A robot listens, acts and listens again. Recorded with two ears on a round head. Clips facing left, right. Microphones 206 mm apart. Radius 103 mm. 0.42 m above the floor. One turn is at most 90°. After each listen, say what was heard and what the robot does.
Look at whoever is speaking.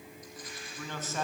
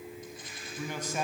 Turn 30° right.
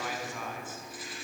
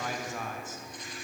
So it is at 140° right. Turn 90° right.
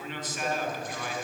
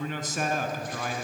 The man speaking is now 40° right. Turn 40° right.
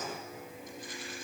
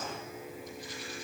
Keep listening.
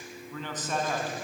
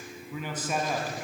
The man speaking is now 10° right. Turn 10° right.
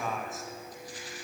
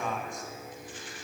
Found it: a man speaking, straight ahead.